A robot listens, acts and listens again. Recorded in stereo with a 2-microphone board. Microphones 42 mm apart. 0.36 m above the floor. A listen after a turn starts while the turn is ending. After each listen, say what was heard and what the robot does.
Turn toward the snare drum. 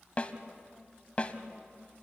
The snare drum: about 30° left or 150° left. Turn 30° left.
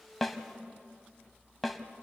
Facing the snare drum, 1 to 2 m away.